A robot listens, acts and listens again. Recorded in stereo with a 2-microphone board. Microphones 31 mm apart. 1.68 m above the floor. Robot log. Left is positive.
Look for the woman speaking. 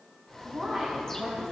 note: The woman speaking: about 20° right or 160° right.
cmd yaw -20
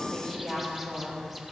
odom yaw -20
end: Facing the woman speaking, 2 to 4 m away.